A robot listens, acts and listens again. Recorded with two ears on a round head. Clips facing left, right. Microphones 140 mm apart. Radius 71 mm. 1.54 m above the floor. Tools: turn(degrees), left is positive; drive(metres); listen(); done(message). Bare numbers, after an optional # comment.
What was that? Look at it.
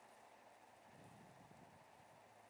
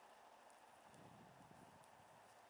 listen()
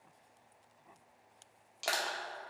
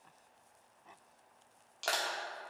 turn(30)
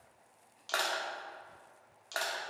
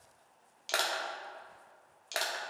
# So it is at 20° right.
turn(-20)
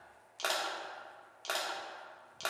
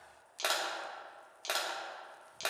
# The crushing is now 10° right.
turn(-10)
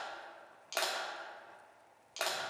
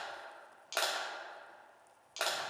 done("Facing the crushing, 1 to 2 m away.")